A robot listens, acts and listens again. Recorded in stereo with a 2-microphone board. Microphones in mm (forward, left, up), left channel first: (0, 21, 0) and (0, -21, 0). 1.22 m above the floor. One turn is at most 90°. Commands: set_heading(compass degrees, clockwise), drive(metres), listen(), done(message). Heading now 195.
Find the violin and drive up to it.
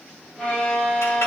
set_heading(165)
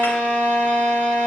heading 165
set_heading(75)
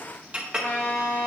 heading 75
set_heading(15)
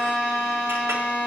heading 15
drive(1.0)
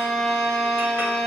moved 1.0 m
set_heading(5)
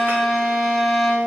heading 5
drive(1.0)
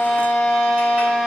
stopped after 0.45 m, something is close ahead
done("I am next to the violin.")